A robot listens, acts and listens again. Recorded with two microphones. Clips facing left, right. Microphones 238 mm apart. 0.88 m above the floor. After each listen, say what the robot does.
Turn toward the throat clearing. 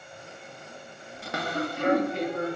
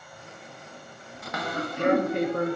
Turn 50° right.
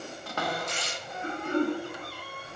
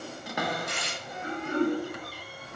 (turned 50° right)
Found it: throat clearing, straight ahead, 2 to 4 m away.